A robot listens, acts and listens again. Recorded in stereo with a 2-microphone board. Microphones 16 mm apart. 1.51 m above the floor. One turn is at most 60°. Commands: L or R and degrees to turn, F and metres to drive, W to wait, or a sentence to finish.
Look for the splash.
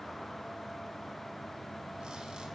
W
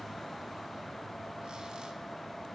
W
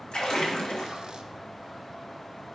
L60
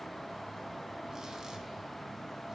L30
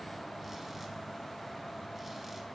Facing where the splash came from. I can't hear it now.